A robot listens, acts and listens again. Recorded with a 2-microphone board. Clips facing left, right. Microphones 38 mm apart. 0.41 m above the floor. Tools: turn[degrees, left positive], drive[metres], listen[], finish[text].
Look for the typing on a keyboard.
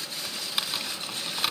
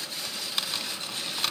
Action: turn[30]
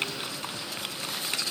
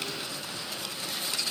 Thought: So it is at 140° left.
Action: turn[140]
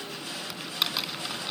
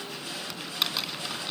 Action: finish[Facing the typing on a keyboard.]